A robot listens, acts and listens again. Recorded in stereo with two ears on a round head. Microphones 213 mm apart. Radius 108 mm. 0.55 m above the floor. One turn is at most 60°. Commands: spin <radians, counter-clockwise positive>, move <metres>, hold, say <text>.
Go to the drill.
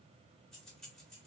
hold
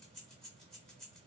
hold
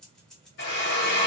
spin 0.87
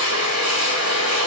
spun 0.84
spin 1.05
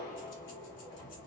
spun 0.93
spin 0.35
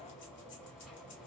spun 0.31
hold
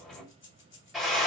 move 1.0
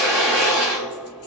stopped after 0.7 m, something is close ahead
say Arrived at the drill, straight ahead.